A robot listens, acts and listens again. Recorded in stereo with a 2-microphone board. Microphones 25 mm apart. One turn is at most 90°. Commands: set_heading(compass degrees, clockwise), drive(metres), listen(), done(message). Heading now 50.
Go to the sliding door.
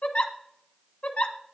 listen()
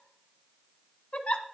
listen()
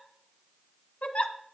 done("I can't make out a sliding door, only a giggle.")